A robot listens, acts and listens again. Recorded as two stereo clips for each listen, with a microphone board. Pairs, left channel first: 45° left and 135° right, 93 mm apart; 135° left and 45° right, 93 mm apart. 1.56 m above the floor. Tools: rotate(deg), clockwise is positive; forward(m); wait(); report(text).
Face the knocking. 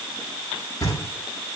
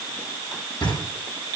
rotate(-100)
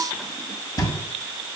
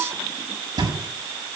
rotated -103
report("Found it: knocking, straight ahead, over 4 m away.")